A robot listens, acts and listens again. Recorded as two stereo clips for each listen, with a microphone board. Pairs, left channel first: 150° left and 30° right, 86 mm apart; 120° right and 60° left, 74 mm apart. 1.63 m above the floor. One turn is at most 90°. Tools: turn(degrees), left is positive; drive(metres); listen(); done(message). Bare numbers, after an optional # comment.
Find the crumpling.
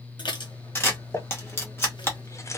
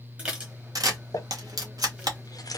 # The crumpling: 155° right.
turn(-90)
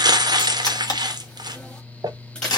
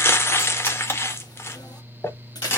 # The crumpling is now 65° right.
turn(-65)
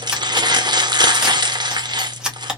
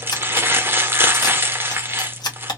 done("Facing the crumpling.")